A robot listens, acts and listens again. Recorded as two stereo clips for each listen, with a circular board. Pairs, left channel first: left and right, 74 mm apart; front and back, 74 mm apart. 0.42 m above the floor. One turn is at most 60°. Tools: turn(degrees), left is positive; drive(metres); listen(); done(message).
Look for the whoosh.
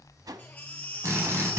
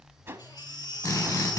turn(degrees=-60)
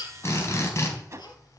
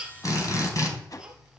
turn(degrees=-40)
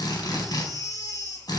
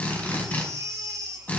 listen()
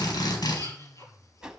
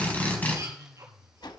turn(degrees=-10)
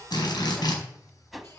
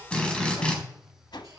done("Facing the whoosh, 1 to 2 m away.")